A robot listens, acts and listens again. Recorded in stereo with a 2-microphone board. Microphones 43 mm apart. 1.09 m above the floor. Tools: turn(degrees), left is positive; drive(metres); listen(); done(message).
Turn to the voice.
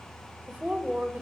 turn(degrees=-40)
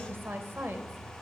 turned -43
turn(degrees=-95)
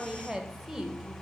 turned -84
turn(degrees=-10)
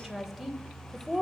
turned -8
done("Found it: a woman speaking, straight ahead.")